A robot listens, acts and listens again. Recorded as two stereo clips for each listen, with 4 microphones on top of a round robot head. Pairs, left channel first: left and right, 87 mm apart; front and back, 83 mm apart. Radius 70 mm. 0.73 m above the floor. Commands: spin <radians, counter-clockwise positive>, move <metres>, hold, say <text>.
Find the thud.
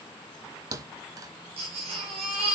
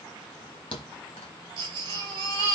spin -0.79
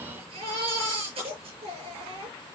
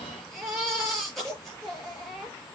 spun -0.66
say Facing where the thud came from. I can't hear it now.